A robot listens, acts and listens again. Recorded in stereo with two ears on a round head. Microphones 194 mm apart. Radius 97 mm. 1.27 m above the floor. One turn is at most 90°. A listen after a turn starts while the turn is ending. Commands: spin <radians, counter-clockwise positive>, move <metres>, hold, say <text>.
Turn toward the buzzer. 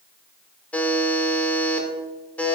spin 0.52
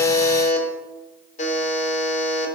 spin 1.57
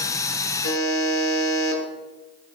spin 1.13
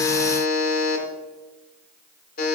spin 0.79
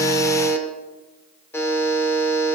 spin 0.17
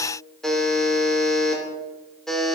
say Facing the buzzer, 2 to 4 m away.